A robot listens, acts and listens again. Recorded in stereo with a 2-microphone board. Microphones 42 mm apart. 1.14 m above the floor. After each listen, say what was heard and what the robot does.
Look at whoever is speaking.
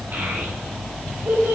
The child speaking: about 45° right or 135° right. Turn 45° right.
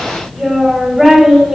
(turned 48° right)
Found it: a child speaking, straight ahead, over 4 m away.